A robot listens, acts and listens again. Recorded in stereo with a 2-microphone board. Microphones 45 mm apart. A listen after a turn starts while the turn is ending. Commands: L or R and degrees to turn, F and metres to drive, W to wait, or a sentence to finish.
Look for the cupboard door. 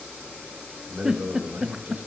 W
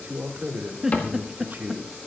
L45
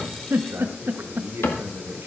L90
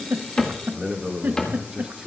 L15
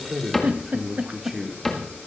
Facing the cupboard door.